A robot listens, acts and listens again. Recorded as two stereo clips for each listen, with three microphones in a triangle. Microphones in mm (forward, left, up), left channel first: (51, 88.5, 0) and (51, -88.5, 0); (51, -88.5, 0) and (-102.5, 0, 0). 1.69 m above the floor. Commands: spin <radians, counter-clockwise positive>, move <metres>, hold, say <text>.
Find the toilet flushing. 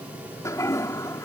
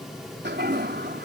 spin 2.79
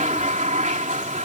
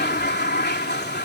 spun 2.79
spin -0.79
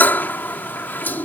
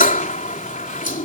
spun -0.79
spin 0.17
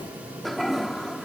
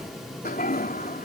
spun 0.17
say Found it: a toilet flushing, straight ahead.